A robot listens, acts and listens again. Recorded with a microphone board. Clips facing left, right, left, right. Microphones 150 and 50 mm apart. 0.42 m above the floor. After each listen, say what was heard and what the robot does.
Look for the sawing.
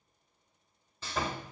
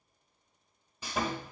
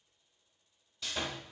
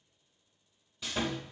Turn 30° right.
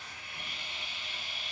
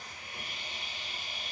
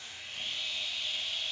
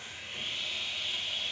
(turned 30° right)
So it is at 135° right. Turn 135° right.
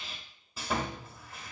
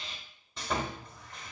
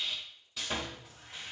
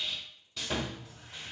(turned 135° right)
Found it: sawing, straight ahead, under 1 m away.